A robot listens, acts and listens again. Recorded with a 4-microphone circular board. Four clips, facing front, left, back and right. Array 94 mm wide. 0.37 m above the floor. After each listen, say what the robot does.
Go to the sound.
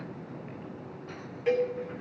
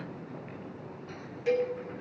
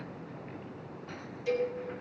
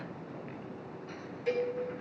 Turn 10° left.
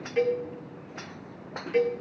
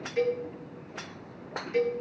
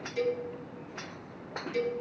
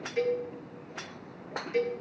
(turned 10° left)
Drive 1.0 m forward.
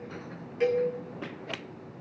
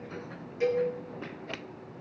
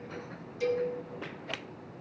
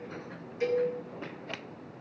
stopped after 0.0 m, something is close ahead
Something is in my way. I am facing the cowbell but have not reached it.